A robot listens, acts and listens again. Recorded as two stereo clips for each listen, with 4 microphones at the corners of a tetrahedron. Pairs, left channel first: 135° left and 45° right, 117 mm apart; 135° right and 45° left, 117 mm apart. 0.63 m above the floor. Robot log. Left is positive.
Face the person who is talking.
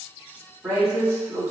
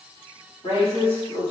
note: The woman speaking: 110° right.
cmd yaw -110
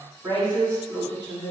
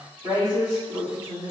end: Facing the woman speaking.